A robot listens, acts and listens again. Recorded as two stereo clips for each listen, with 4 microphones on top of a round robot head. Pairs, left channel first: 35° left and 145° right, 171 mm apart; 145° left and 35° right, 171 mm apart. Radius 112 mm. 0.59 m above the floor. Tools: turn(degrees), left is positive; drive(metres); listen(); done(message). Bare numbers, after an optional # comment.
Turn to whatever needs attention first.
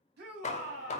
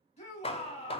# The shout: 165° right.
turn(-165)
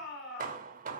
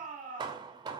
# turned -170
done("Found it: a shout, straight ahead.")